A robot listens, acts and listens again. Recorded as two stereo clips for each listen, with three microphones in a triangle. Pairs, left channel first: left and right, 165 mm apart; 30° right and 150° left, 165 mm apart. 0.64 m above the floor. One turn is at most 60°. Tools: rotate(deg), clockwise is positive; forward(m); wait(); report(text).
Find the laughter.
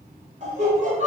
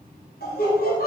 rotate(50)
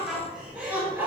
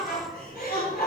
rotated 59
rotate(10)
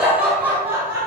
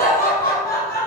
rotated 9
rotate(20)
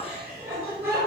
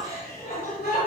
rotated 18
rotate(15)
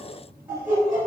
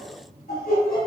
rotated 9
rotate(20)
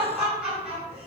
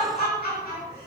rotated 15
report("Facing the laughter, 2 to 4 m away.")